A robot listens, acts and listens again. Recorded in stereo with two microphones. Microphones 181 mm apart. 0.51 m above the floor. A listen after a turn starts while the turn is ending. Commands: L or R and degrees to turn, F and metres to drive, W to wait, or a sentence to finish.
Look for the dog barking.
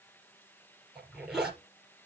W
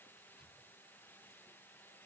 W
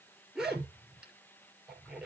I can't make out a dog barking to turn to.